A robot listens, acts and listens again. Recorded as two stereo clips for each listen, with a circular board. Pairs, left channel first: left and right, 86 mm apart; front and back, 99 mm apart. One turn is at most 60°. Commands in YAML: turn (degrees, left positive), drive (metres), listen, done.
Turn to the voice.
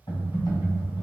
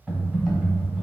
listen: true
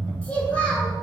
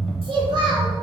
turn: 60
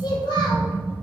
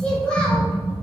turn: 60
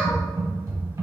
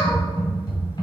turn: 20
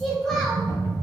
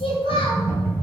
done: "Found it: a child speaking, straight ahead, 1 to 2 m away."